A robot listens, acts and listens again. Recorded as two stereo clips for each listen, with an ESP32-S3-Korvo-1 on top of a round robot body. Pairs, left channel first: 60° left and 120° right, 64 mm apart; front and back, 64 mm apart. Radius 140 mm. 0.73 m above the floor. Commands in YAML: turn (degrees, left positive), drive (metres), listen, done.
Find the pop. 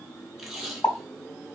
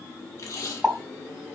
turn: 105
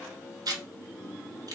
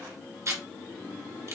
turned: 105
done: "I heard a pop from this way, but can't make it out now."